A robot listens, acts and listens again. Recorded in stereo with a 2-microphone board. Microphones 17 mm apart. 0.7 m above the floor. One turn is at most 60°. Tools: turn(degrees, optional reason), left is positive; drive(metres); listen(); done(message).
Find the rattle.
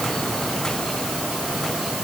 listen()
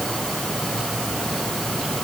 listen()
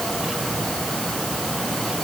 done("I can't make out a rattle to turn to.")